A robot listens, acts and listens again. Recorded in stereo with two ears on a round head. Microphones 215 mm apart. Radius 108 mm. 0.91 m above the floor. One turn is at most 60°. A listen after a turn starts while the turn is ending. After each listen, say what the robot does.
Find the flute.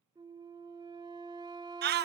Turn 20° right.
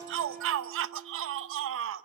Keep listening.
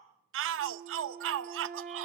Turn 60° right.
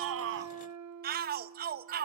Turn 60° right.
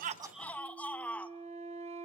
Turn 30° right.
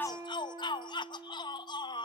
Turn 15° right.
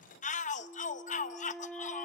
Facing the flute.